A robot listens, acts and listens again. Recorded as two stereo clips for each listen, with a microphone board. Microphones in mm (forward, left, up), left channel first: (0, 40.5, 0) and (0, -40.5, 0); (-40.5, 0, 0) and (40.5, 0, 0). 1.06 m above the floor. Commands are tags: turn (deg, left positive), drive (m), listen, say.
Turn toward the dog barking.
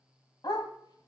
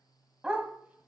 <turn deg="75"/>
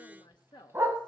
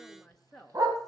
<turn deg="-35"/>
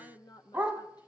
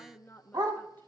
<turn deg="-25"/>
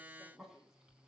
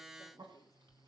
<listen/>
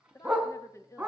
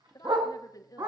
<turn deg="-15"/>
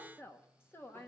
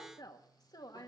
<listen/>
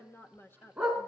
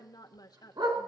<turn deg="-10"/>
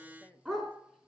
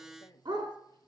<say>Found it: a dog barking, straight ahead, 2 to 4 m away.</say>